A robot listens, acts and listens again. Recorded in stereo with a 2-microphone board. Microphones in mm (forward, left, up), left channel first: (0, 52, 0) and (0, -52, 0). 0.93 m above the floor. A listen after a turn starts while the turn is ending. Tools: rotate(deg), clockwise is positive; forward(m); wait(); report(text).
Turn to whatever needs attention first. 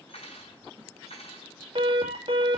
rotate(55)
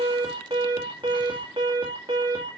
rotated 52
rotate(60)
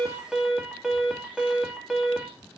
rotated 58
report("Found it: an alarm, straight ahead.")